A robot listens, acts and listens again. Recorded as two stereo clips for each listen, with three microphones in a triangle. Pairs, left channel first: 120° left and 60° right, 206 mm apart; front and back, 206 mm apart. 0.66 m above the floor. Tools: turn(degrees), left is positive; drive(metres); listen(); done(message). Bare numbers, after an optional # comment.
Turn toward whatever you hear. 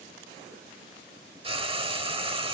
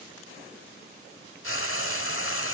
done("Facing the frying.")